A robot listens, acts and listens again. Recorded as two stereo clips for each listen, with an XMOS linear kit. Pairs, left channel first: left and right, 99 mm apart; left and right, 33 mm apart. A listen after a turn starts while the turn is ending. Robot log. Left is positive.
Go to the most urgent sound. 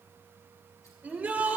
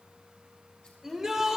cmd yaw -30
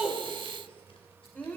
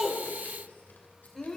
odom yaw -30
note: So it is at 15° left.
cmd yaw +15
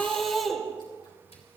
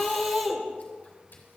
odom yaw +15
cmd fwd 1.0
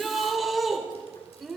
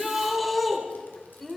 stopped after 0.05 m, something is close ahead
end: Something is in my way. I am facing the shout but have not reached it.